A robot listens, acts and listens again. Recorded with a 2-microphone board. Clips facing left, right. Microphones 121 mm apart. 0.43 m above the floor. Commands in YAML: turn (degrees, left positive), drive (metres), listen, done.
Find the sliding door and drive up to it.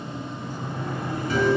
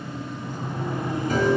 turn: -20
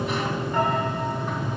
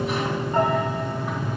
drive: 1.0
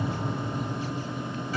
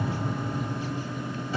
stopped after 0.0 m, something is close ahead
done: "Something is in my way. I am facing the sliding door but have not reached it."